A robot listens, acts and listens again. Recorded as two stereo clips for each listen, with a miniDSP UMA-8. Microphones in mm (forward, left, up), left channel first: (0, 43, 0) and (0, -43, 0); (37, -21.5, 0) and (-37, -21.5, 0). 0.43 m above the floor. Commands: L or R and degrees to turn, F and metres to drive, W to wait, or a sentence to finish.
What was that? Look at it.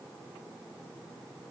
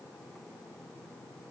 W
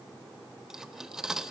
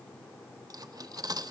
R170
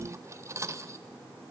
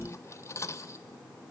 R45
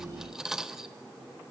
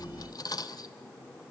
Facing the cutlery clinking.